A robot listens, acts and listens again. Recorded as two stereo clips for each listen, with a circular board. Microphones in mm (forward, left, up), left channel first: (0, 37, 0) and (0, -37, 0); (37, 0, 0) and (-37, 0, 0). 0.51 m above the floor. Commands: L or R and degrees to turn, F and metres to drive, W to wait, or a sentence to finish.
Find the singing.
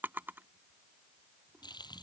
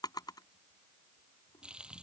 W
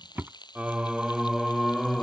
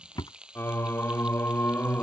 L15
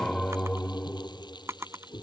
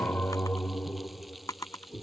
L60
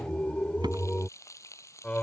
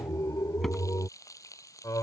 L25
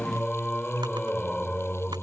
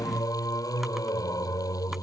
L15
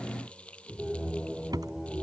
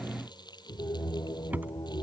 Found it: singing, straight ahead.